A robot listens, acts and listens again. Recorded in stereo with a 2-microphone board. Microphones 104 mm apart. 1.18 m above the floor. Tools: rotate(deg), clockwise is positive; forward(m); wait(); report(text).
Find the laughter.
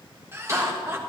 rotate(25)
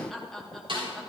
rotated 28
report("Facing the laughter, 1 to 2 m away.")